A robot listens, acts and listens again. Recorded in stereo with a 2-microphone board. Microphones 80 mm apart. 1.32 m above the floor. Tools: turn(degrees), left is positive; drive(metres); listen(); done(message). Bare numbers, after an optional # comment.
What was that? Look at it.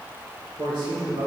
turn(-90)
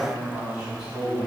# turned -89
# So it is at 10° right.
turn(-10)
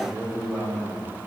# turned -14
done("Facing the man speaking, over 4 m away.")